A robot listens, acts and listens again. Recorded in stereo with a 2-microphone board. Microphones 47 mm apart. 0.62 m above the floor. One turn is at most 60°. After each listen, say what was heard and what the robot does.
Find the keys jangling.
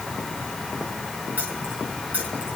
The keys jangling: about 30° right or 150° right. Turn 30° right.
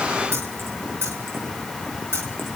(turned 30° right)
So it is at 120° right. Turn 60° right.
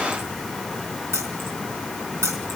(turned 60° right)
The keys jangling is now 65° right. Turn 60° right.
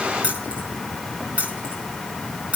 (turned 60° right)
The keys jangling is now 30° right. Turn 30° right.
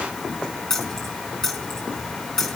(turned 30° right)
The keys jangling is now 10° left. Turn 10° left.
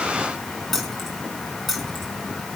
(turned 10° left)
Facing the keys jangling.